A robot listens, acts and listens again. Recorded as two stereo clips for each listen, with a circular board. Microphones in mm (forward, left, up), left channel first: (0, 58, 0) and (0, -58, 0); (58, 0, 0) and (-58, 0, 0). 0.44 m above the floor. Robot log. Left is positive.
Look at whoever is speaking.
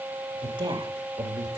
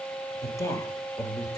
note: The woman speaking: 50° right.
cmd yaw -50
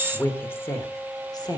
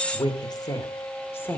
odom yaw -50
note: The woman speaking is now 65° left.
cmd yaw +65
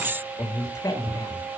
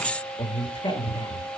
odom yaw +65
note: The woman speaking is now 40° left.
cmd yaw +40
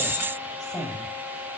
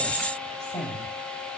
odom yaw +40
end: Found it: a woman speaking, straight ahead.